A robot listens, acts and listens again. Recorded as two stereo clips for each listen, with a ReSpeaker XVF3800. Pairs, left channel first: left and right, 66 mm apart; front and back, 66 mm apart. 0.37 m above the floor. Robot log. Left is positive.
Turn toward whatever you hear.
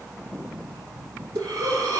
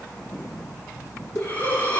note: The breathing: 65° right.
cmd yaw -65
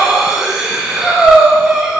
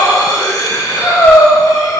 note: The breathing is now 10° right.
cmd yaw -10
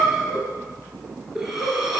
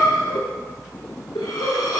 end: Facing the breathing.